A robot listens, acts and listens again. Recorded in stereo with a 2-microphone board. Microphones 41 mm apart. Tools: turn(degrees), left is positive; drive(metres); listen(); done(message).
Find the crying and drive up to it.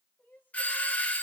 turn(degrees=50)
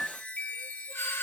listen()
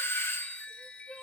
drive(metres=1.0)
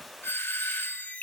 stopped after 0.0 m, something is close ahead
listen()
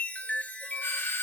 listen()
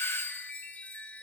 done("I heard crying from this way, but can't make it out now. I did not reach it.")